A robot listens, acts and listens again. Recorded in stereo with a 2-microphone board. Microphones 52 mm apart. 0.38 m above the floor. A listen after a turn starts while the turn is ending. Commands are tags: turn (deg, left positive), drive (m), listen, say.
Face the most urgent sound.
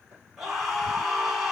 <turn deg="-30"/>
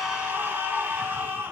<turn deg="-140"/>
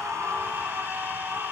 <turn deg="-40"/>
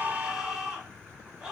<say>Facing the scream, 2 to 4 m away.</say>